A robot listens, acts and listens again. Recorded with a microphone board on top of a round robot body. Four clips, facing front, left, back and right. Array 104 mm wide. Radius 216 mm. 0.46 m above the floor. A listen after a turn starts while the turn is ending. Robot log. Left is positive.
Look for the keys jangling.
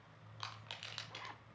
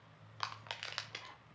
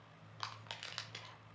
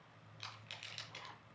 cmd idle
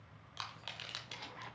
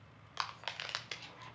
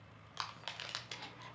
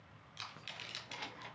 note: The keys jangling: 80° right.
cmd yaw -80
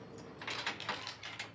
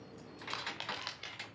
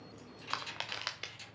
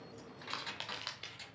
note: The keys jangling is now 35° left.
cmd yaw +35
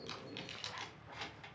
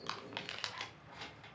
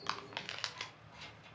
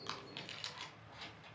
note: The keys jangling is now 20° left.
cmd yaw +20
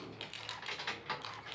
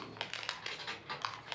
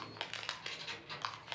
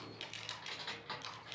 end: Facing the keys jangling.